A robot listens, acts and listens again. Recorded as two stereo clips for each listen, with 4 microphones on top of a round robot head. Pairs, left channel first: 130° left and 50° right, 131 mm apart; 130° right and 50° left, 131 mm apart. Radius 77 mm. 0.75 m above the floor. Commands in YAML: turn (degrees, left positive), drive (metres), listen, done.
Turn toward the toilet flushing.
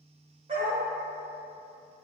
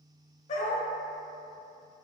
listen: true
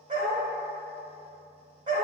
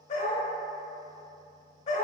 listen: true
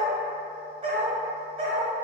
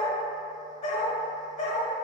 done: "I can't make out a toilet flushing, only a dog barking."